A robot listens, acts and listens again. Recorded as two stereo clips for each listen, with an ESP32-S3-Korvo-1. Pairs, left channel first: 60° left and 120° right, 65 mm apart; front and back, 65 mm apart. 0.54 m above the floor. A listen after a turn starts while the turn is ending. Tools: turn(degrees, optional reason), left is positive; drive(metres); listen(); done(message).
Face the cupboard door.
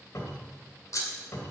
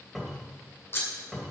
turn(degrees=90, reason="The cupboard door: 90° left.")
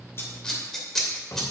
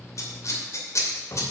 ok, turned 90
turn(degrees=25, reason="The cupboard door is now 25° left.")
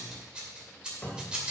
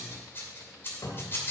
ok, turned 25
done("Facing the cupboard door, 2 to 4 m away.")